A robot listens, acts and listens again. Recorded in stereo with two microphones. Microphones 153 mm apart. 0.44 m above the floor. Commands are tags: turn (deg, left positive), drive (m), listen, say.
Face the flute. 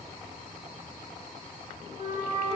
<turn deg="90"/>
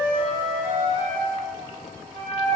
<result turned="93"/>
<say>Found it: a flute, straight ahead, 1 to 2 m away.</say>